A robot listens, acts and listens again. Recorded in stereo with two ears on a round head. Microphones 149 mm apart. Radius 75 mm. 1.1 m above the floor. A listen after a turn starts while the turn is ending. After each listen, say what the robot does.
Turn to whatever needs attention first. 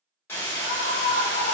Turn 65° left.
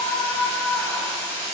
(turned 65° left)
Facing the scream.